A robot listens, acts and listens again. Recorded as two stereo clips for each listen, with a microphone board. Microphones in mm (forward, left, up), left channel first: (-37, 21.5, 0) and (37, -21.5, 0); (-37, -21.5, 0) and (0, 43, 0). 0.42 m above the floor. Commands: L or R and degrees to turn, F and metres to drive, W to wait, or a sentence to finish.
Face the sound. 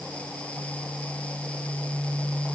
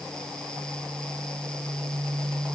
W
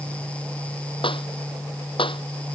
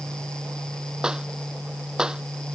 L140
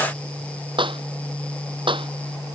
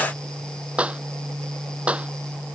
R15
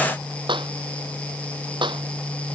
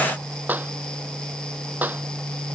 Facing the clap.